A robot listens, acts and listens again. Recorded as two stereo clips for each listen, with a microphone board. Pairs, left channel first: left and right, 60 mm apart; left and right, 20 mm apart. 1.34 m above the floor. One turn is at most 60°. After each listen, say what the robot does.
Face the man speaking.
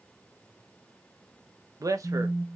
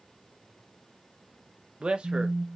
Turn 60° right.
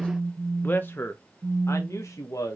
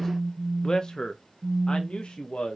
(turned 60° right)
Turn 60° left.
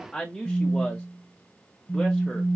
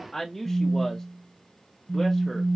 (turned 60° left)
Facing the man speaking, 1 to 2 m away.